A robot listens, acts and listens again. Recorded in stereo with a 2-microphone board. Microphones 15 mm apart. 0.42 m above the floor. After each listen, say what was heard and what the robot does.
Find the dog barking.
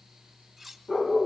The dog barking: about 60° left or 120° left. Turn 60° left.
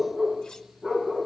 Found it: a dog barking, straight ahead, over 4 m away.